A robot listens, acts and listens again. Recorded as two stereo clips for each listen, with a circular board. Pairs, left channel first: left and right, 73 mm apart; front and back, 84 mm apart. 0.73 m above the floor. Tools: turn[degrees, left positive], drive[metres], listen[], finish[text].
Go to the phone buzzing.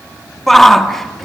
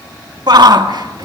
Action: listen[]
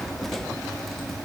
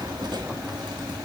Action: listen[]
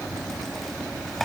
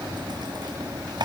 Action: finish[I can't make out a phone buzzing, only a shout.]